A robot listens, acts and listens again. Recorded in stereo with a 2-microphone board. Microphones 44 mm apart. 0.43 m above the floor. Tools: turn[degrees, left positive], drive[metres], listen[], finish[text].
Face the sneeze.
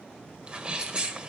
Thought: The sneeze: about 25° right or 155° right.
Action: turn[-25]
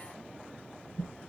Action: listen[]
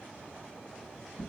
Action: finish[I heard a sneeze, but can't make it out now. It was about straight ahead or 130° right.]